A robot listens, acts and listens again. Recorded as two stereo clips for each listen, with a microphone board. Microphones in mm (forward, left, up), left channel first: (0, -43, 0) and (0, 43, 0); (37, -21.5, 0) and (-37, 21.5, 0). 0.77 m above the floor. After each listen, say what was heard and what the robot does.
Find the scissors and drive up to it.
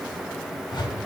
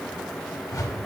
Keep listening.
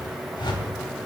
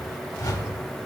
Keep listening.
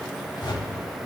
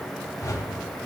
I can't make out scissors, only a whoosh.